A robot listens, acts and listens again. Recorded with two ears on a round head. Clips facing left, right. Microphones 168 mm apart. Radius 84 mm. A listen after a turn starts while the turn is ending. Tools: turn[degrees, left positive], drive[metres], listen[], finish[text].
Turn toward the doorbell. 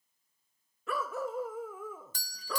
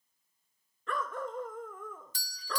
Thought: The doorbell: about 45° left or 135° left.
Action: turn[45]
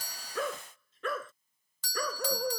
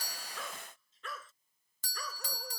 Thought: So it is at 85° left.
Action: turn[85]
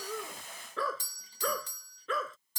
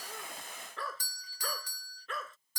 Thought: The doorbell is now 25° left.
Action: turn[25]
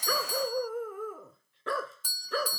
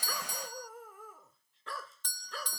Thought: The doorbell is now 10° left.
Action: turn[10]
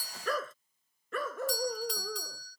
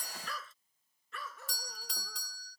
Action: finish[Facing the doorbell.]